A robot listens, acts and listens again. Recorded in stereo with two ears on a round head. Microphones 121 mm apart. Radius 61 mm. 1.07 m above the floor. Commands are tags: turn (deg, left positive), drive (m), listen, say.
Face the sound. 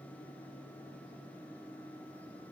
<listen/>
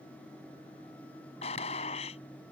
<turn deg="45"/>
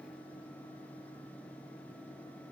<listen/>
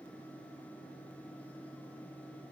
<say>I heard a gunshot, but can't make it out now. It was about straight ahead or 90° left.</say>